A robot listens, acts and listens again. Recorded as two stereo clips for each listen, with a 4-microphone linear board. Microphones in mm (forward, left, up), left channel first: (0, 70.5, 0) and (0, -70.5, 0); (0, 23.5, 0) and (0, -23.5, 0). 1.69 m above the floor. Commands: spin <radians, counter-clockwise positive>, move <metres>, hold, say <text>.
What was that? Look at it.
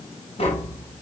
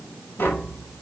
spin 0.79
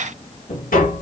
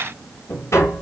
spin 1.48
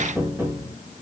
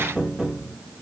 spin -0.26
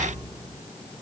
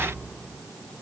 say Found it: tapping, straight ahead.